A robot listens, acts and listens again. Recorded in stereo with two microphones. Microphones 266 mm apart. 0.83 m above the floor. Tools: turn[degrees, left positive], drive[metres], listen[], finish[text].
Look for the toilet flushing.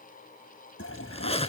Thought: The toilet flushing: about 55° left or 125° left.
Action: turn[55]
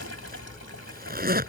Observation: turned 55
Action: listen[]
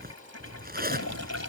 Thought: So it is at 70° left.
Action: turn[70]
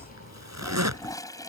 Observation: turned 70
Thought: The toilet flushing is now 15° left.
Action: turn[15]
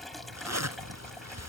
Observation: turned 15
Action: finish[Found it: a toilet flushing, straight ahead.]